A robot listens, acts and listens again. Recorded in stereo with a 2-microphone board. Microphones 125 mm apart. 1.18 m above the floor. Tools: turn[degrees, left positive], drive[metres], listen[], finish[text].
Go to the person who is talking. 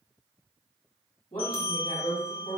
Action: turn[90]
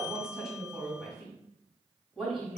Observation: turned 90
Action: drive[1.0]
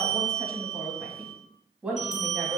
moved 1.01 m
Thought: The woman speaking is now 10° right.
Action: turn[-10]
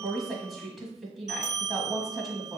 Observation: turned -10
Action: drive[1.0]
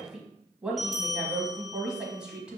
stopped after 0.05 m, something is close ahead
Action: finish[Arrived at the woman speaking, straight ahead.]